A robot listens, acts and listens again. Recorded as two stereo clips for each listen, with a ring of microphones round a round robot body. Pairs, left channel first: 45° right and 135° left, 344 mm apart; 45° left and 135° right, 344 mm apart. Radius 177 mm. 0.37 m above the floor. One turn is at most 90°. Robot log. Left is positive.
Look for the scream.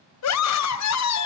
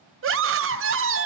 note: The scream: 85° right.
cmd yaw -85
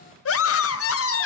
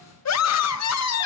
end: Facing the scream.